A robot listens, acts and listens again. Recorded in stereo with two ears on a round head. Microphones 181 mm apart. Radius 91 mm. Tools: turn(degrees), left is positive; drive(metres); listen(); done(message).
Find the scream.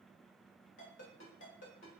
listen()
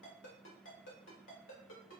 listen()
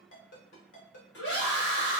turn(degrees=60)
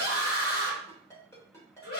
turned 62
turn(degrees=55)
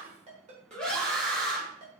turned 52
done("Facing the scream, 1 to 2 m away.")